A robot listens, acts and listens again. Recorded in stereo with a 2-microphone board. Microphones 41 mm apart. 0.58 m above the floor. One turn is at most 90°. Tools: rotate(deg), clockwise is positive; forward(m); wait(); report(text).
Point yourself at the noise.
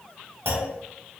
rotate(65)
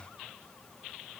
wait()
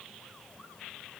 report("I heard a clunk, but can't make it out now. It was about straight ahead or 50° right.")